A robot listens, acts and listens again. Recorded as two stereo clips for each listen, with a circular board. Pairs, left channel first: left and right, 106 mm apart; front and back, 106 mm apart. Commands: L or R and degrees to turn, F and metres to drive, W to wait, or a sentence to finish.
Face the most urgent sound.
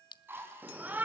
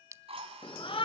R15
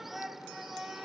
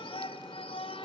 Found it: a shout, straight ahead.